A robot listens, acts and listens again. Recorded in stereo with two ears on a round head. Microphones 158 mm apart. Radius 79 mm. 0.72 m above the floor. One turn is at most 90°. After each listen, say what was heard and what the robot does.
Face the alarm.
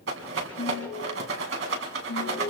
Turn 90° left.
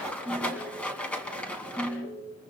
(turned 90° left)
Found it: an alarm, straight ahead.